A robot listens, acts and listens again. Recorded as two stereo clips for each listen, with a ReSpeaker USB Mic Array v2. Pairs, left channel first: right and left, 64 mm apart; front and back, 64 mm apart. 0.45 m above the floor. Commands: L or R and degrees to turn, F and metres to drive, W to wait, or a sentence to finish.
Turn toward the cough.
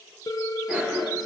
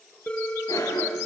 L15
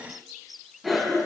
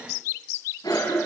Found it: a cough, straight ahead.